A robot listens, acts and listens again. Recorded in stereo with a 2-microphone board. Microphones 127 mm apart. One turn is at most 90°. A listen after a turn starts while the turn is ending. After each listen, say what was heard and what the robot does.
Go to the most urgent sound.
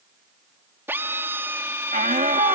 Turn 90° right.
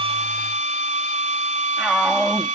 Drive 1.0 m forward.
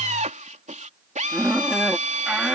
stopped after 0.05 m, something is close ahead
Blocked. The shout is further on, straight ahead.